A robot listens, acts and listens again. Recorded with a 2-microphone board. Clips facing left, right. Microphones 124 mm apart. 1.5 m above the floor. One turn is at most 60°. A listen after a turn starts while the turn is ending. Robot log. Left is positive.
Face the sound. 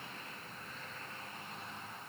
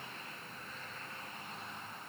cmd idle
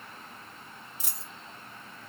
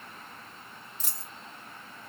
cmd yaw +30
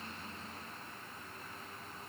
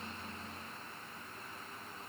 cmd idle
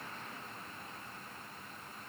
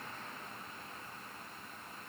end: I heard a dropped coin, but can't make it out now. It was about 20° right or 140° left.